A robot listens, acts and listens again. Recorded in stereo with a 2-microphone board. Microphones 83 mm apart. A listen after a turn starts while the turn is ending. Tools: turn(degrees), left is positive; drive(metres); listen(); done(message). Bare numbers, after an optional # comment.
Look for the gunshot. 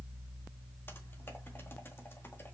listen()
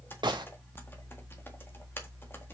# The gunshot: about 65° right or 115° right.
turn(-65)
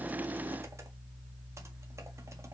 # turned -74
listen()
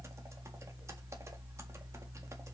done("I heard a gunshot, but can't make it out now. It was about 10° left or 45° right.")